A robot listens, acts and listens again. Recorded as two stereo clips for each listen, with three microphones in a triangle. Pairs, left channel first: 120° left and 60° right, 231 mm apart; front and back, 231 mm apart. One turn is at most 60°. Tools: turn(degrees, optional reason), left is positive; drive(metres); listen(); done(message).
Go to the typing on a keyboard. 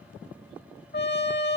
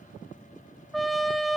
listen()
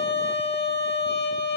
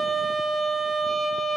listen()
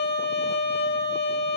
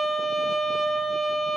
done("I can't make out typing on a keyboard to turn to.")